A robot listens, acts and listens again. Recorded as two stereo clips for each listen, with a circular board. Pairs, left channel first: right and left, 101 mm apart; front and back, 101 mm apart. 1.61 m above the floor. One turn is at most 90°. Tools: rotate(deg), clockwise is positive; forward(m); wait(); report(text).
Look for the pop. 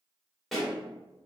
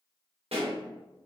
rotate(-90)
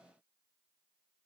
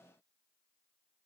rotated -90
rotate(-90)
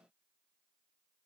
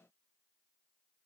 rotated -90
report("I heard a pop from this way, but can't make it out now.")